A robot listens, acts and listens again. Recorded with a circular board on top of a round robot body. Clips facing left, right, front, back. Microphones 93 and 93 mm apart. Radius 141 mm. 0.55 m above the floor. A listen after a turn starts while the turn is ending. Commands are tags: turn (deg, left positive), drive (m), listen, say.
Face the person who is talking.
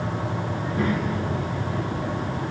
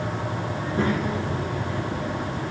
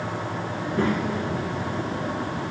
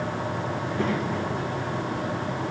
<turn deg="-25"/>
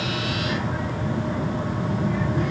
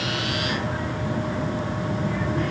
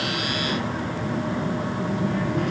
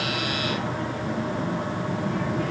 <turn deg="15"/>
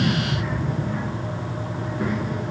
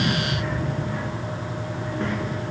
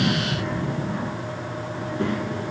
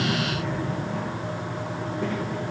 <turn deg="10"/>
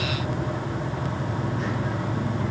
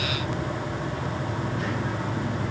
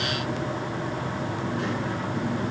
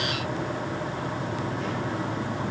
<listen/>
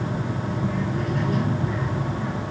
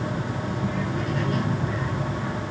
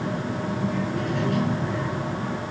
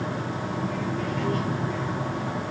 <say>Facing the child speaking.</say>